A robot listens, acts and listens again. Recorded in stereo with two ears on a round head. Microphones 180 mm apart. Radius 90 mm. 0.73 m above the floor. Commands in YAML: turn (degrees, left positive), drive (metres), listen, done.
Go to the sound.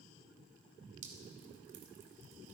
turn: -40
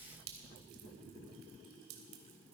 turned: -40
turn: -100
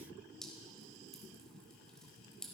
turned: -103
drive: 1.0
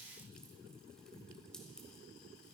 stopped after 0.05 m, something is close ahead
done: "Blocked. The dripping is further on, straight ahead."